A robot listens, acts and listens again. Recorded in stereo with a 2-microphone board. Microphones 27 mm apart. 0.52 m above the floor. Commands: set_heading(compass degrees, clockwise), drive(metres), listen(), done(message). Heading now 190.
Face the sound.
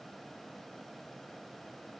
listen()
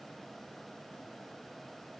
listen()
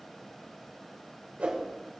set_heading(240)
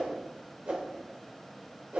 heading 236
set_heading(301)
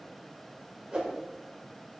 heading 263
set_heading(303)
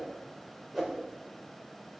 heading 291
set_heading(301)
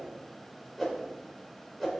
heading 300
done("Facing the whoosh, 2 to 4 m away.")